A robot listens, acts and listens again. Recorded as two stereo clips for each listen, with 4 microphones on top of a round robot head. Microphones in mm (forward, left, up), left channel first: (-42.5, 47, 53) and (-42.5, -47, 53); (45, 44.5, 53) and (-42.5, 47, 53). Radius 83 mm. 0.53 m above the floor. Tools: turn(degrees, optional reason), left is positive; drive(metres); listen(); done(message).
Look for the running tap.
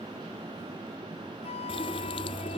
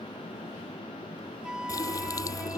turn(degrees=50, reason="The running tap: 50° left.")
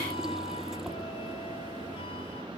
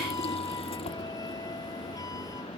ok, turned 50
listen()
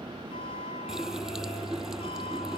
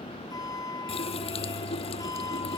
done("Found it: a running tap, straight ahead.")